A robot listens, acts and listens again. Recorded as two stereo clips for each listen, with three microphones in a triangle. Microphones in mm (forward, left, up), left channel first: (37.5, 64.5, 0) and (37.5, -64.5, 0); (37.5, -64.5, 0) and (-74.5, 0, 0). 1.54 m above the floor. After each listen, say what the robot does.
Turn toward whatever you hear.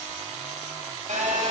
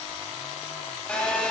Turn 110° right.
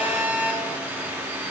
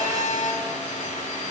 Turn 15° right.
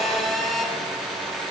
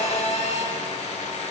Facing the phone buzzing.